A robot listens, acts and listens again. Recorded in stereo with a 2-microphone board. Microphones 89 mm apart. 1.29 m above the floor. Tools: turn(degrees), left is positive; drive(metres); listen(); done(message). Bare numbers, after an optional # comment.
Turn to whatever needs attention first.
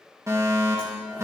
# The fire alarm: about 35° right or 145° right.
turn(-35)
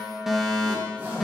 done("Facing the fire alarm, 2 to 4 m away.")